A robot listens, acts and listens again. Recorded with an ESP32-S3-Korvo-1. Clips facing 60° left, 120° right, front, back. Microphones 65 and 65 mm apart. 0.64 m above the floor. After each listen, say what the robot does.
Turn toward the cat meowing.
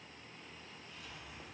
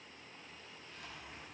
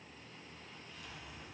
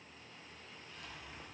Keep listening.
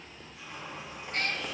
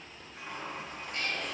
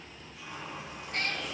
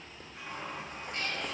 Turn 30° left.
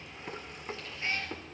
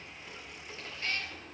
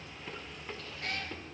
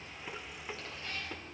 Found it: a cat meowing, straight ahead, 1 to 2 m away.